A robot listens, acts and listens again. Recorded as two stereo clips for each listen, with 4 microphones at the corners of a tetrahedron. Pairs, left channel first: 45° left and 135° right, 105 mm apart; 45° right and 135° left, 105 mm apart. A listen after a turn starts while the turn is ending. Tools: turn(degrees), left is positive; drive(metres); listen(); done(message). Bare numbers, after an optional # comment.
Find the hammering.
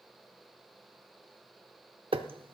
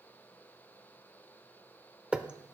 # The hammering: 145° right.
turn(-145)
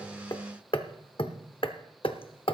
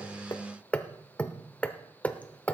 # The hammering is now 30° left.
turn(30)
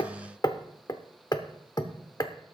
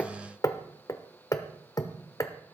done("Facing the hammering, under 1 m away.")